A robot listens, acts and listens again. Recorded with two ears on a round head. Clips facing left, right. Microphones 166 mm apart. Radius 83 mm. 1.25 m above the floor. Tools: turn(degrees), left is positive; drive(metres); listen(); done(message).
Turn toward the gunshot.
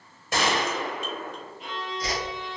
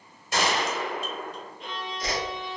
turn(degrees=45)
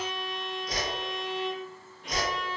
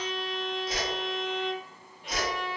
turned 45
listen()
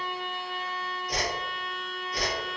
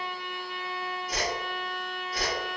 done("I heard a gunshot, but can't make it out now. It was about straight ahead or 90° left.")